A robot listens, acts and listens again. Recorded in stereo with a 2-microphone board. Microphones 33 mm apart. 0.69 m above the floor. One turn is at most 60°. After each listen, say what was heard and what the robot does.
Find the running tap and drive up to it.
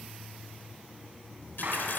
Turn 60° left.
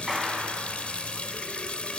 So it is at 40° left. Turn 40° left.
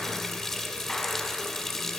The running tap is now 10° left. Turn 10° left.
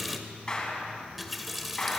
Drive 1.0 m forward.
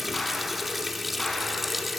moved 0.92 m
Drive 1.0 m forward.
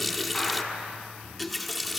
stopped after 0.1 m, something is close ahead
Arrived at the running tap, straight ahead.